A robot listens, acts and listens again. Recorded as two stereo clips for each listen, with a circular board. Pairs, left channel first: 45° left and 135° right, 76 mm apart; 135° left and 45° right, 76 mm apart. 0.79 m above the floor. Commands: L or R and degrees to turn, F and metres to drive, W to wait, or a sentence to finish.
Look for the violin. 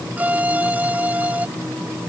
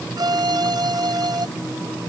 R65
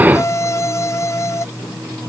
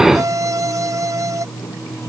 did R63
Found it: a violin, straight ahead.